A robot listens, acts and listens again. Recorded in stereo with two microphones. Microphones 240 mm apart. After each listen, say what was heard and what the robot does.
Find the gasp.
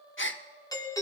The gasp: about 55° left or 125° left. Turn 55° left.
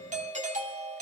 Keep listening.
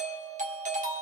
I heard a gasp, but can't make it out now. It was about straight ahead or 70° left.